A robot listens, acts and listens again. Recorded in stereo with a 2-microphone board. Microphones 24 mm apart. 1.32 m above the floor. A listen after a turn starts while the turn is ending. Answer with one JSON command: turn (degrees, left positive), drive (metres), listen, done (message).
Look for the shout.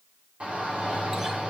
{"turn": -65}
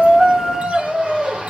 {"turn": -50}
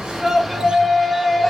{"done": "Found it: a shout, straight ahead."}